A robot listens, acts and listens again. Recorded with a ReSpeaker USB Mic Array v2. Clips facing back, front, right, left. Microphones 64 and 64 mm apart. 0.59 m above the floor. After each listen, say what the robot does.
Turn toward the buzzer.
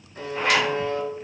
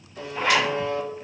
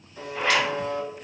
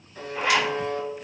Turn 135° left.
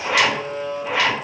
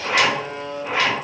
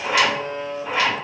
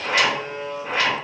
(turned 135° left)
Turn 15° left.
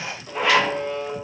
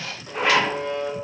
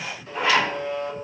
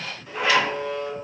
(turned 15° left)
Facing the buzzer, 1 to 2 m away.